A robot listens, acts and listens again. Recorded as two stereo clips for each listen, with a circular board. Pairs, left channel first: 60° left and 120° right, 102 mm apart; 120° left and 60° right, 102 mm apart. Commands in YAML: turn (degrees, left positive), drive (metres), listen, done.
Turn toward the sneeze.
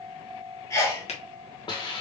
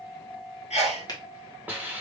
turn: 120
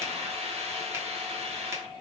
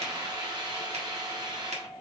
done: "Facing where the sneeze came from. I can't hear it now."